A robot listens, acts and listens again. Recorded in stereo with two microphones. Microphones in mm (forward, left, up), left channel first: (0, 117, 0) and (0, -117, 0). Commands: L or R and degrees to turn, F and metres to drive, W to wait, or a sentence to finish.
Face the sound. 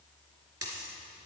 R90
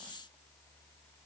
I heard a dropped coin from this way, but can't make it out now.